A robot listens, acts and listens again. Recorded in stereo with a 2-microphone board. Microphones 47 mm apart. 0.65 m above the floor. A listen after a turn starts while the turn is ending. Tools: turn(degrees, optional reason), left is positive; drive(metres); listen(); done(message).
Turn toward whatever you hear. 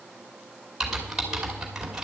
turn(degrees=-30)
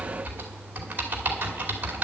turn(degrees=-140, reason="So it is at 140° right.")
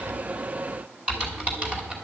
turn(degrees=-25, reason="The typing on a keyboard is now 25° right.")
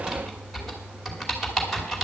done("Facing the typing on a keyboard, 2 to 4 m away.")